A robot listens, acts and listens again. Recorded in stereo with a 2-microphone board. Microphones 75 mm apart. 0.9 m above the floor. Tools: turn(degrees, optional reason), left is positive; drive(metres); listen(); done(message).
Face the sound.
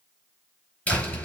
turn(degrees=15, reason="The door slam: about 15° left or 165° left.")
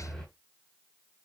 done("Facing the door slam.")